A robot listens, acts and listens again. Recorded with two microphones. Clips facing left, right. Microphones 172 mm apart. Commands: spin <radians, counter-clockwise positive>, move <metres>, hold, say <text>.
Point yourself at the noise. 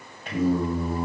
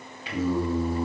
spin 0.96
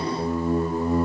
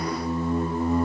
spin 0.61
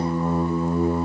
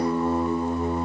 say Found it: singing, straight ahead, 2 to 4 m away.